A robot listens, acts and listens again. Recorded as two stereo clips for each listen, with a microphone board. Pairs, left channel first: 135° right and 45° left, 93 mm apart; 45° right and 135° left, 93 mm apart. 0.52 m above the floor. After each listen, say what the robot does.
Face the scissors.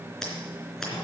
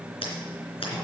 Turn 50° right.
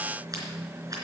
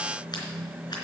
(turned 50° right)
Keep listening.
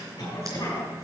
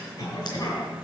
Keep listening.
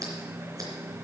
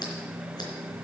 Facing where the scissors came from. I can't hear it now.